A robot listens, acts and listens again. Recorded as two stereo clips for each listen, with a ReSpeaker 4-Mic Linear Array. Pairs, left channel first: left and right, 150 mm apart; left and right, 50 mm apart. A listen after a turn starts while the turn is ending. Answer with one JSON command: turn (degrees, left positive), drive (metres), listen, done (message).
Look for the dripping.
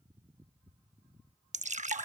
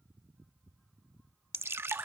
{"turn": -55}
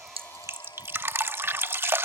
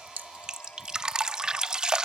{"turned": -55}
{"turn": -20}
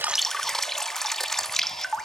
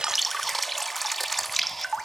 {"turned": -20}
{"done": "Facing the dripping."}